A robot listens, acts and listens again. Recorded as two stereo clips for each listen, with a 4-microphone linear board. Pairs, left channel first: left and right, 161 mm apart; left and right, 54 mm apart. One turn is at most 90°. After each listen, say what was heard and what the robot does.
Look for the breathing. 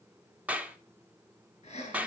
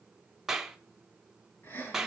The breathing: about 50° left or 130° left. Turn 50° left.
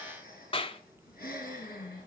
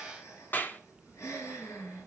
So it is at 85° left. Turn 85° left.
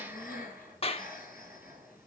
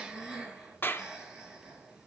The breathing is now 15° right. Turn 15° right.
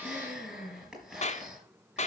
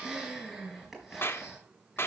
Facing the breathing.